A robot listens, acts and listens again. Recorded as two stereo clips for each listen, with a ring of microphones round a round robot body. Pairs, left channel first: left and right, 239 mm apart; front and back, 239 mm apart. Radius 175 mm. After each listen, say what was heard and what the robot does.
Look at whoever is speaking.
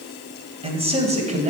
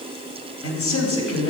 The man speaking: 30° right. Turn 30° right.
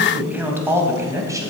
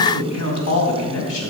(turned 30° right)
The man speaking is now 15° right. Turn 15° right.
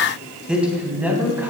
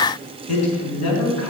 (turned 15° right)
The man speaking is now 10° right. Turn 10° right.
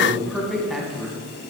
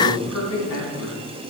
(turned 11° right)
Found it: a man speaking, straight ahead, 2 to 4 m away.